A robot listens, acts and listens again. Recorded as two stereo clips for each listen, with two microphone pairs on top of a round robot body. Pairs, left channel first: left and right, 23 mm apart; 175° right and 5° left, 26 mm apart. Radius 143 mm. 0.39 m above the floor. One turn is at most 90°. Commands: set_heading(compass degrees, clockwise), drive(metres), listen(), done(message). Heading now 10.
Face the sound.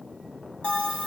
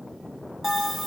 set_heading(280)
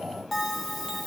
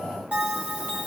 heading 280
set_heading(270)
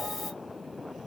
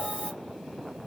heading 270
done("Facing the bell, 2 to 4 m away.")